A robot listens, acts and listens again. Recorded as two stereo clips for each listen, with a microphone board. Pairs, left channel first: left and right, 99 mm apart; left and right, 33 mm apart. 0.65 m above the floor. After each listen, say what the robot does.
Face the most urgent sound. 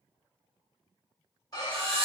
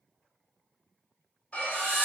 Turn 40° left.
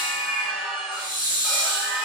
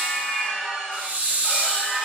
Facing the scream.